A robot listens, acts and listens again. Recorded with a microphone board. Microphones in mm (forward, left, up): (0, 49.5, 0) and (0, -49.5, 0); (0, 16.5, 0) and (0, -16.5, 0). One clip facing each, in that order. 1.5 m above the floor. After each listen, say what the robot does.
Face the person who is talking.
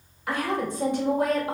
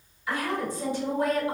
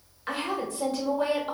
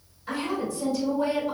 Turn 60° left.
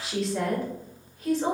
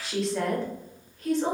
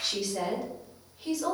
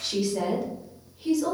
Facing the woman speaking, 1 to 2 m away.